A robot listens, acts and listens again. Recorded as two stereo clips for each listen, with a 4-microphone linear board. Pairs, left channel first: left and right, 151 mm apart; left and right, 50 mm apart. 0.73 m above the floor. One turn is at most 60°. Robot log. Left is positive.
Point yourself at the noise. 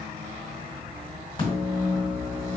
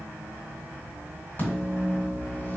note: The microwave: about 35° left or 145° left.
cmd yaw +35
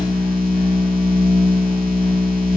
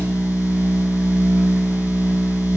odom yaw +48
note: So it is at 95° left.
cmd yaw +60
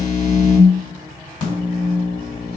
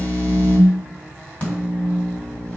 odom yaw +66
note: The microwave is now 30° left.
cmd yaw +30
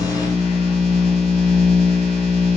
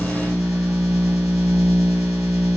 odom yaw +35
end: Facing the microwave.